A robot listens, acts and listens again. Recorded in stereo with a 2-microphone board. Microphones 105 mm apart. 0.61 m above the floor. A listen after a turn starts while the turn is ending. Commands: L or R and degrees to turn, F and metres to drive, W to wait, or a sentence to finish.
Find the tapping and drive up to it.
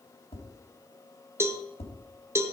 L90
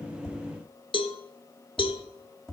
F1.0
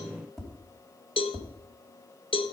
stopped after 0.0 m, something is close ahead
Blocked. The tapping is further on, straight ahead.